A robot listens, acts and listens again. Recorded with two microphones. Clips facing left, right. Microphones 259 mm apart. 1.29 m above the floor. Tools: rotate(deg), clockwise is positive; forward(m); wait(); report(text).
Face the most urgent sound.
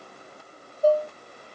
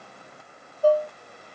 wait()
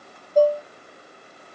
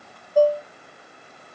wait()
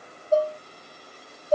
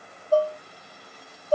report("I can't make out anything urgent, only dishes clattering.")